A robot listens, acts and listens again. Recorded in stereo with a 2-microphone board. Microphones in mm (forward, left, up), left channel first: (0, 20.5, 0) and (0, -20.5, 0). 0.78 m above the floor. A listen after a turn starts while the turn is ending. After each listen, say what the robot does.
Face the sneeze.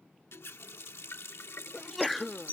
Turn 30° left.
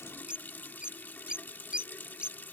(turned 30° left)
Keep listening.
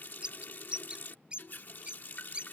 I heard a sneeze, but can't make it out now. It was about 30° right or 150° left.